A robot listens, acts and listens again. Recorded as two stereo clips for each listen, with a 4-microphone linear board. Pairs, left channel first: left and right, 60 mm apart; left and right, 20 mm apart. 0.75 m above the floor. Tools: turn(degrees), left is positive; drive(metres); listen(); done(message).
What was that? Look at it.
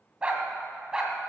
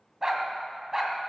turn(degrees=-30)
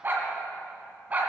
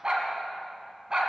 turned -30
turn(degrees=-150)
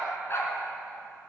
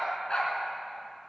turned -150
turn(degrees=45)
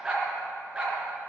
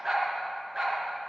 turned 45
turn(degrees=-10)
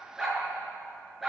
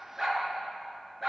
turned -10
done("Facing the dog barking.")